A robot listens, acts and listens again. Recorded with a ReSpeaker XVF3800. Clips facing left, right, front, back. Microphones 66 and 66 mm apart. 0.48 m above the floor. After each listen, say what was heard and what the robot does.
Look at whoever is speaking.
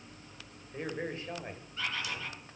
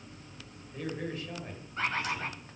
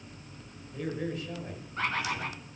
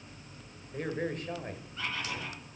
The man speaking: 145° left. Turn 145° left.
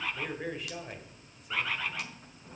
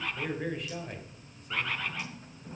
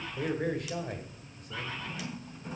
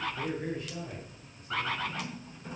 Facing the man speaking.